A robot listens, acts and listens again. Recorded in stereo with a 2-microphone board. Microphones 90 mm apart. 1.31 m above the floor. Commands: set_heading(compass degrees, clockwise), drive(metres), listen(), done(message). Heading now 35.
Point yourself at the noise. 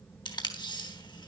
set_heading(340)
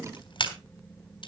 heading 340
set_heading(270)
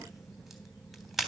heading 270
done("Facing the tape being pulled, 2 to 4 m away.")